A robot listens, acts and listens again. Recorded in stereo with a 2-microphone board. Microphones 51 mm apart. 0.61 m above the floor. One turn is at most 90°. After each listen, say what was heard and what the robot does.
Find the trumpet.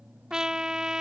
Turn 30° right.
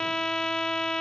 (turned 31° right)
So it is at 15° left. Turn 15° left.
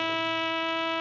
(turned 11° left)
Found it: a trumpet, straight ahead.